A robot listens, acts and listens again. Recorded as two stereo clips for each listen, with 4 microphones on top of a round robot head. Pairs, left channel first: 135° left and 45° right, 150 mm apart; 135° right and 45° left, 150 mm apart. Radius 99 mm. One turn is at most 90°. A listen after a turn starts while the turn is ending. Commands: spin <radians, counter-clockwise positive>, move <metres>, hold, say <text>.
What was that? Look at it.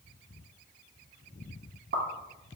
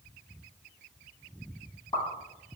spin -1.13
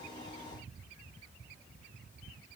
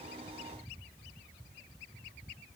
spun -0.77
spin -0.44
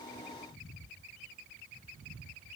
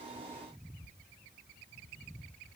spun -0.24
spin -0.17
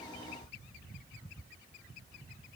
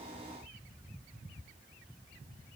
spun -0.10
say Facing where the pop came from. I can't hear it now.